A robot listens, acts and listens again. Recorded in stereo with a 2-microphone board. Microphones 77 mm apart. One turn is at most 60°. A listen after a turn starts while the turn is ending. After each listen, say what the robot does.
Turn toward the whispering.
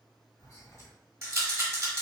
Turn 50° left.
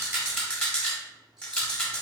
Keep listening.
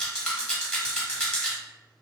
Keep listening.
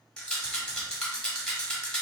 I heard whispering, but can't make it out now. It was about straight ahead or 80° left.